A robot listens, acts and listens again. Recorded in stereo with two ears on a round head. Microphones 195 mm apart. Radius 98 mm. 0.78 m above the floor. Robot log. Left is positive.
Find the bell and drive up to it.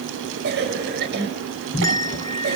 note: The bell: about 15° left or 165° left.
cmd yaw +15
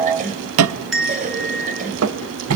cmd fwd 1.0
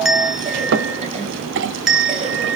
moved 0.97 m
cmd fwd 1.0
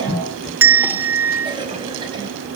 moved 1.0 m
note: The bell is now 10° right.
cmd yaw -10
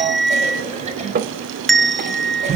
cmd fwd 1.0
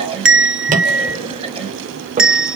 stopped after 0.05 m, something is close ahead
end: Arrived at the bell, straight ahead.